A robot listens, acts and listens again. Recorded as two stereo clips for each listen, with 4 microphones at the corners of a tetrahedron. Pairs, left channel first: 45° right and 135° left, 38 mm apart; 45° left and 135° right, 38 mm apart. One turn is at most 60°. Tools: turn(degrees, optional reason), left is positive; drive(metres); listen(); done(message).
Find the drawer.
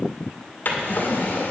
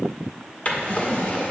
done("Found it: a drawer, straight ahead, 2 to 4 m away.")